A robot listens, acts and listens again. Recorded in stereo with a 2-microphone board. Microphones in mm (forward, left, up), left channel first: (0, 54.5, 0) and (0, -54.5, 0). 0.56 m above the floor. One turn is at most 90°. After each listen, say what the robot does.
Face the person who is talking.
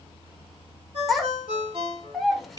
Turn 30° left.
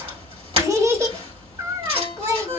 Turn 30° right.
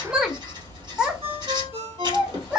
Facing the child speaking, under 1 m away.